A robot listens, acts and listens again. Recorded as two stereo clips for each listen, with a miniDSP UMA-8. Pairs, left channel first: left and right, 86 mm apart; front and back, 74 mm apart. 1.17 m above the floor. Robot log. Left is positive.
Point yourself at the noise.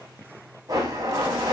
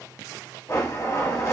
note: The blender: 50° right.
cmd yaw -50
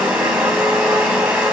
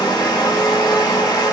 note: The blender is now 15° right.
cmd yaw -15
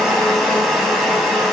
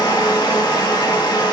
end: Facing the blender, under 1 m away.